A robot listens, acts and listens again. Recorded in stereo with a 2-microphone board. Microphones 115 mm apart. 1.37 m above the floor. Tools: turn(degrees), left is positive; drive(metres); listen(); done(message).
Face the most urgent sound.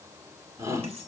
turn(degrees=-25)
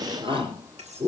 turn(degrees=-130)
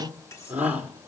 turn(degrees=-15)
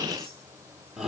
done("Found it: a shout, straight ahead, 2 to 4 m away.")